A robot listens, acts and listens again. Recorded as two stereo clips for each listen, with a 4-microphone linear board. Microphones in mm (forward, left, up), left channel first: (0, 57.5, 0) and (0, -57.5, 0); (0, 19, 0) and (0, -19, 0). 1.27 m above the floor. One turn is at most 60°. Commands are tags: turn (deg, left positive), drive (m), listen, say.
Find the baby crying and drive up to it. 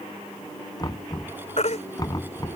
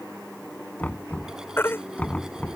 <turn deg="60"/>
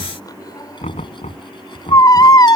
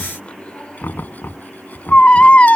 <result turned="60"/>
<turn deg="35"/>
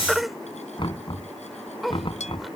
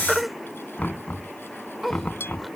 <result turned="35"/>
<drive m="1.0"/>
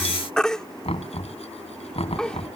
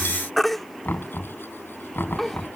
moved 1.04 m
<drive m="1.0"/>
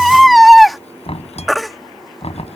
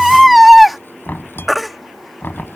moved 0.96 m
<drive m="1.0"/>
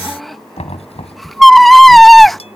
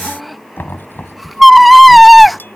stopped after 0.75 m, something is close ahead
<say>Arrived at the baby crying, straight ahead.</say>